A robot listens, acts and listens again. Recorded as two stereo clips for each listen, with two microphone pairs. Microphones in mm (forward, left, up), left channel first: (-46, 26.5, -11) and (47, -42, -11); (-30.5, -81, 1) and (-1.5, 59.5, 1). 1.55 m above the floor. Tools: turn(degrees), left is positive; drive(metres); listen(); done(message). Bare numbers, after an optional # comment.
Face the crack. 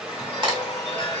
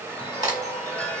# The crack: 15° left.
turn(15)
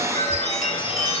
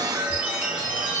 done("Facing where the crack came from. I can't hear it now.")